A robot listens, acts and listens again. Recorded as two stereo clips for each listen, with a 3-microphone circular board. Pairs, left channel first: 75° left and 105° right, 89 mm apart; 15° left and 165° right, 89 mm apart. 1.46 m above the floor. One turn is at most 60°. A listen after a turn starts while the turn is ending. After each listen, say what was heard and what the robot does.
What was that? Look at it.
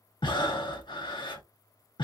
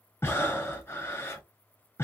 The breathing: 75° left. Turn 60° left.
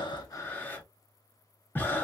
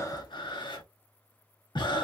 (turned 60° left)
The breathing is now 10° left. Turn 10° left.
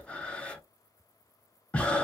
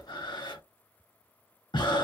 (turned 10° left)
Facing the breathing.